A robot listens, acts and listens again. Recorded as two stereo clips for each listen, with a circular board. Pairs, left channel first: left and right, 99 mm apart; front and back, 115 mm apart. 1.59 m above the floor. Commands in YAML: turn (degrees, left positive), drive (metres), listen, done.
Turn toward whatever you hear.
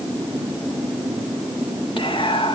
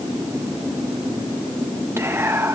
turn: 115
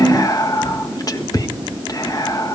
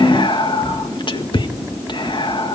turn: 40
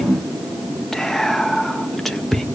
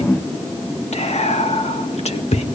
done: "Found it: whispering, straight ahead, 1 to 2 m away."